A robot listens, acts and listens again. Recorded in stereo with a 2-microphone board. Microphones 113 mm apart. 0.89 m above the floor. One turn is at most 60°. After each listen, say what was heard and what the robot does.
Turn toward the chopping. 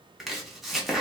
Turn 30° left.
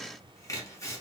So it is at 150° left. Turn 60° left.
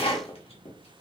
The chopping is now 110° left. Turn 60° left.
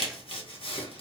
The chopping is now 60° left. Turn 60° left.
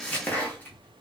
The chopping is now 15° left. Turn 15° left.
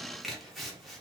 Facing the chopping, under 1 m away.